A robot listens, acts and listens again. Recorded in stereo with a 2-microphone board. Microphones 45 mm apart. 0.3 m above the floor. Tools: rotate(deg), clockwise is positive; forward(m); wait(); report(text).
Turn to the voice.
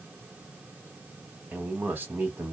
rotate(45)
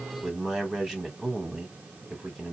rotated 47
rotate(10)
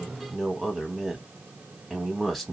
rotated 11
report("Facing the man speaking.")